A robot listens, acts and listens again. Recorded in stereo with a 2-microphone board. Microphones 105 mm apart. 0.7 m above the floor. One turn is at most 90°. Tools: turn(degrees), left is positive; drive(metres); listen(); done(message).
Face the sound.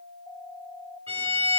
turn(degrees=-65)
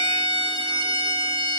turn(degrees=-50)
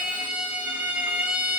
turn(degrees=-10)
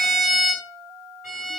done("Facing the violin, over 4 m away.")